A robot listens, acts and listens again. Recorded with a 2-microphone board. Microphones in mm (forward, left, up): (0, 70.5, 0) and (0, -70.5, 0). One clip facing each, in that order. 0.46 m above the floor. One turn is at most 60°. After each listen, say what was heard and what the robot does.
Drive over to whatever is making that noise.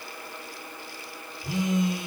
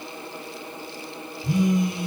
The phone buzzing: about 20° left or 160° left. Turn 20° left.
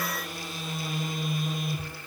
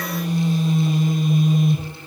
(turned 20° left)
Drive 1.0 m forward.
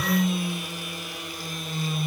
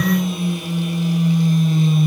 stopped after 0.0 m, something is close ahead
Blocked. The phone buzzing is further on, straight ahead.